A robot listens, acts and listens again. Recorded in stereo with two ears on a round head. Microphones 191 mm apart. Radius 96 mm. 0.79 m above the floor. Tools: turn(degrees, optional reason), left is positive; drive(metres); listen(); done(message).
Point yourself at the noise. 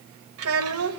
turn(degrees=-90)
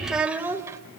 turn(degrees=-15, reason="So it is at 15° right.")
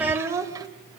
turn(degrees=-15, reason="The child speaking is now 15° right.")
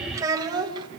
turn(degrees=-20, reason="The child speaking is now 20° right.")
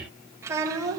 turn(degrees=-15, reason="The child speaking is now 15° right.")
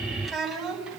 done("Facing the child speaking.")